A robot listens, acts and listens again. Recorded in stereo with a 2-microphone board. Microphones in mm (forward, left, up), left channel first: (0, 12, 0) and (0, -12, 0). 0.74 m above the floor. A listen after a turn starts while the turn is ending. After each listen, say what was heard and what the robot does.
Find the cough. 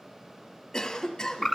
The cough: about 25° left or 155° left. Turn 25° left.
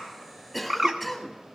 Found it: a cough, straight ahead.